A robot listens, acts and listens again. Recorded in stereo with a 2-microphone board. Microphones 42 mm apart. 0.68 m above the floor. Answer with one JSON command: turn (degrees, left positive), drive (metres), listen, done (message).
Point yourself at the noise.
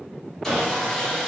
{"turn": 30}
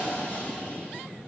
{"turn": 140}
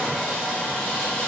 {"turn": 25}
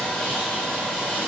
{"turn": 20}
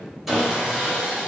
{"done": "Found it: sawing, straight ahead."}